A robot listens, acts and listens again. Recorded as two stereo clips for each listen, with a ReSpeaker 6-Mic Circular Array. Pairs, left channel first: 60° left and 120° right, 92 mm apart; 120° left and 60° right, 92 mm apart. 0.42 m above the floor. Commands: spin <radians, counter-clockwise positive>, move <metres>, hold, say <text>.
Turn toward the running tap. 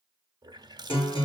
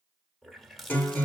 spin -2.62
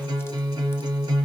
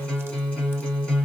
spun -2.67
hold
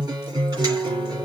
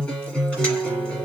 hold
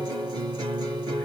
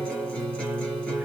say Facing where the running tap came from. I can't hear it now.